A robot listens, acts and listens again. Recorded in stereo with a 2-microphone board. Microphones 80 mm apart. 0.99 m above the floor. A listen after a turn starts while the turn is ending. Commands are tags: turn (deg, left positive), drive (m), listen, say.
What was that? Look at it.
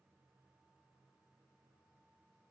<listen/>
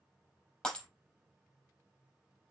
<turn deg="30"/>
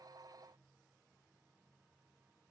<listen/>
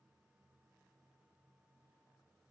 <say>I heard breaking glass, but can't make it out now. It was about 20° right or 140° left.</say>